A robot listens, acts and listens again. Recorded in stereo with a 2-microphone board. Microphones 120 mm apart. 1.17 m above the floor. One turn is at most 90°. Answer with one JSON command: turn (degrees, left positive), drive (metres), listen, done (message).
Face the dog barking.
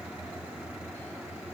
{"listen": true}
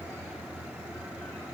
{"listen": true}
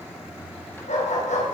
{"turn": 90}
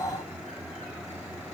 {"listen": true}
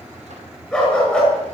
{"done": "Facing the dog barking, over 4 m away."}